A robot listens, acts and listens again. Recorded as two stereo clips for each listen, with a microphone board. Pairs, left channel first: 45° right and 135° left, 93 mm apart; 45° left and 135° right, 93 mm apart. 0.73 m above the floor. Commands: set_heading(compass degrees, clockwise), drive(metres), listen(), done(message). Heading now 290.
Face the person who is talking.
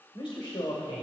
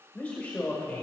set_heading(320)
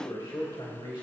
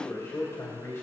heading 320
set_heading(335)
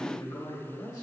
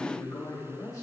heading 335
done("Found it: a man speaking, straight ahead, 2 to 4 m away.")